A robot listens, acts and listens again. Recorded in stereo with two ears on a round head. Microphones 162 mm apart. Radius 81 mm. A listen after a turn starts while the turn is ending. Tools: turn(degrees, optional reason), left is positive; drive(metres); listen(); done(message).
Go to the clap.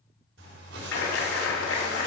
turn(degrees=90)
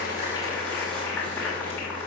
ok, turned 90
turn(degrees=10, reason="So it is at 10° left.")
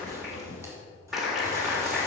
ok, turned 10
drive(metres=1.0)
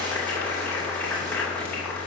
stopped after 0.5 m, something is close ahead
turn(degrees=10, reason="The clap is now 10° left.")
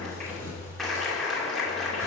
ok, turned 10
done("Something is in my way. I am facing the clap but have not reached it.")